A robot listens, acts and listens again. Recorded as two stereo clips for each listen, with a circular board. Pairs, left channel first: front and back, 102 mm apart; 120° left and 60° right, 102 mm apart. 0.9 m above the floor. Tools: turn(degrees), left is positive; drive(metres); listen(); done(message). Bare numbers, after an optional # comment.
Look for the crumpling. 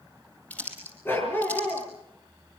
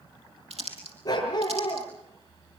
# The crumpling: 75° right.
turn(-75)
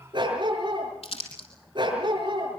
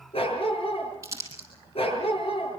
done("Facing the crumpling, over 4 m away.")